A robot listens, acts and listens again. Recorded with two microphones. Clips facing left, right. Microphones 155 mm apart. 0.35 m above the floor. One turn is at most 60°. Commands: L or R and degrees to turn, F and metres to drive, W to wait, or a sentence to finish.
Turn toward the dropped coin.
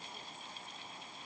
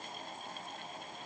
W
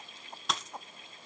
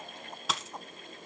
L30
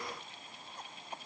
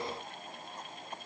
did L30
W
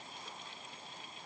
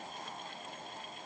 I heard a dropped coin, but can't make it out now. It was about 30° right or 150° left.